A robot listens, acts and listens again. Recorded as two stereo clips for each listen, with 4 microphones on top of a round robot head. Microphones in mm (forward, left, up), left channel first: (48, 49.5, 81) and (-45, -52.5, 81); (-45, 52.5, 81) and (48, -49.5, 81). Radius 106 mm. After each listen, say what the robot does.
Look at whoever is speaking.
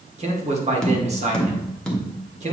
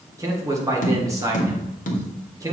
Turn 110° right.
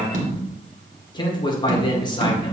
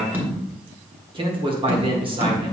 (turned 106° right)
Found it: a man speaking, straight ahead, 2 to 4 m away.